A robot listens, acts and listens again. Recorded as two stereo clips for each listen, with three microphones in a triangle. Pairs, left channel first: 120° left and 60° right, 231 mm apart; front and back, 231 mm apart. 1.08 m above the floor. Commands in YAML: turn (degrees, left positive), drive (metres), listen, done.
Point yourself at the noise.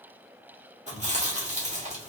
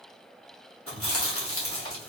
done: "Found it: chewing, straight ahead."